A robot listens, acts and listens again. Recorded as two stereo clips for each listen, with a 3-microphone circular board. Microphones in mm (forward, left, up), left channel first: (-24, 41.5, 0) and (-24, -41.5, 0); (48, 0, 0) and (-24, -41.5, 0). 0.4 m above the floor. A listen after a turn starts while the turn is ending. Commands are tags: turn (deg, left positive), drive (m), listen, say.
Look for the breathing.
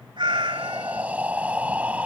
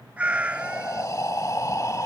<turn deg="-15"/>
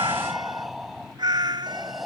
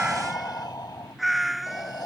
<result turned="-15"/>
<say>Found it: breathing, straight ahead.</say>